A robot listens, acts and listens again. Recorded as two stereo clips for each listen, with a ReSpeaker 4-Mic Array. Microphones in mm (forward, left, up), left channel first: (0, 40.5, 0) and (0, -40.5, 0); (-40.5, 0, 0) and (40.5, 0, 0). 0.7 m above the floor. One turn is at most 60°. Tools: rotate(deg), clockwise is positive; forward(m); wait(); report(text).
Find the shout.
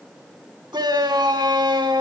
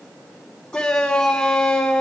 rotate(60)
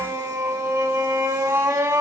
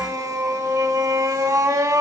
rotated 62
rotate(45)
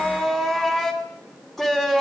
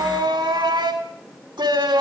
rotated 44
report("Found it: a shout, straight ahead.")